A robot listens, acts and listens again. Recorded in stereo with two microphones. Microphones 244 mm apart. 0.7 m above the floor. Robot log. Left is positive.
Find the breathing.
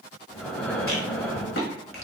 cmd yaw +30
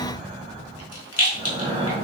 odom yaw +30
note: So it is at 25° right.
cmd yaw -25
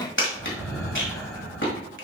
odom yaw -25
note: The breathing is now 10° left.
cmd yaw +10
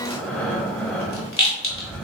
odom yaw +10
end: Found it: breathing, straight ahead, 2 to 4 m away.